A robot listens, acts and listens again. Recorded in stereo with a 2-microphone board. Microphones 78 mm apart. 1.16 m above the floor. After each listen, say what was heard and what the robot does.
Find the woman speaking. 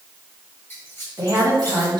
The woman speaking: about 65° right or 115° right. Turn 65° right.
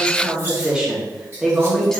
Found it: a woman speaking, straight ahead, 1 to 2 m away.